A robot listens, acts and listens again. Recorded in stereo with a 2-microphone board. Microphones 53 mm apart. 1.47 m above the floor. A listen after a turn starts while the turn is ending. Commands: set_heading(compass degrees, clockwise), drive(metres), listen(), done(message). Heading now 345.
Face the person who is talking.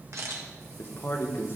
set_heading(300)
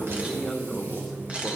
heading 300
done("Facing the man speaking, 1 to 2 m away.")